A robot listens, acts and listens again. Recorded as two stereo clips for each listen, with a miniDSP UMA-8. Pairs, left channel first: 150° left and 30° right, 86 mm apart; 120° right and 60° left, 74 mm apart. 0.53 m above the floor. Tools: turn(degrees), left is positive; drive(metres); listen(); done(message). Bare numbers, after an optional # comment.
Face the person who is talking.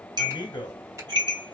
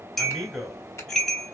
# The man speaking: 150° left.
turn(150)
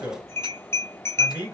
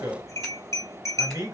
# The man speaking is now 30° left.
turn(30)
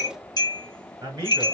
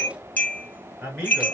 done("Found it: a man speaking, straight ahead, 1 to 2 m away.")